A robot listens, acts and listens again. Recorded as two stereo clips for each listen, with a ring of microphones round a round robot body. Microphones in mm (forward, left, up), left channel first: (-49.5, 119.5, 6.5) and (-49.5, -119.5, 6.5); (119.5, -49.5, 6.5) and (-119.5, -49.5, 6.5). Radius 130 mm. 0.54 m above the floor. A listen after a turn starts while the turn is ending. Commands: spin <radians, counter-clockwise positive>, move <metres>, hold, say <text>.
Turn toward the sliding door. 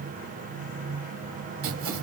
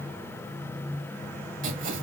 hold
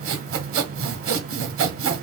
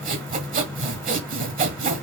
hold
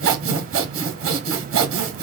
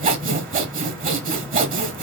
say I can't make out a sliding door, only sawing.